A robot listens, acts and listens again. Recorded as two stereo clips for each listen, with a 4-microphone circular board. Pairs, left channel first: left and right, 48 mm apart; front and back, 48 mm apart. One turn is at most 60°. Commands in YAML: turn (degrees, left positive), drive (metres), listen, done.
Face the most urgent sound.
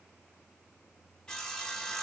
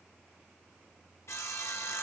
listen: true
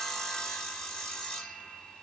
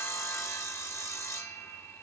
listen: true
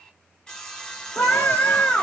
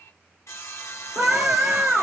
turn: 60
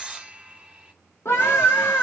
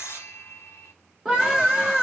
turn: 60
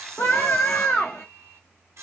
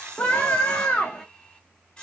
turn: 55
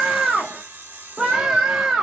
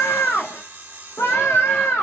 done: "Facing the scream."